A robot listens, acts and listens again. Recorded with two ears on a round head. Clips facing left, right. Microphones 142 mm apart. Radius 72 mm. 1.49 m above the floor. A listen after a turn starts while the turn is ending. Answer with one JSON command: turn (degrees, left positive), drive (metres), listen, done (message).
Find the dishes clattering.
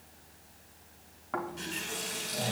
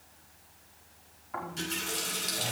{"listen": true}
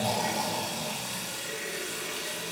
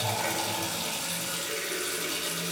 {"listen": true}
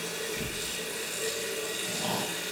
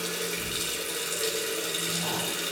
{"done": "I can't make out dishes clattering to turn to."}